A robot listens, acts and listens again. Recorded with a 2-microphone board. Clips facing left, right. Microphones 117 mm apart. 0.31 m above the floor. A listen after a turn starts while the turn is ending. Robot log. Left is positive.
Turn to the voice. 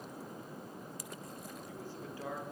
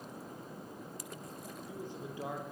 note: The man speaking: about 20° right or 160° right.
cmd yaw -20
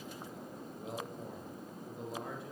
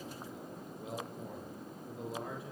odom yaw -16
cmd yaw +30
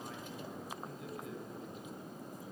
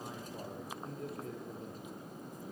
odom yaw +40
note: So it is at 40° right.
cmd yaw -40
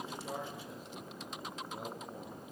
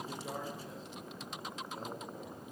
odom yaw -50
note: Nothing new. It was at 10° left.
cmd yaw +10
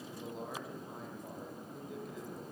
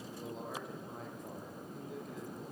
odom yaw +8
end: Facing the man speaking, over 4 m away.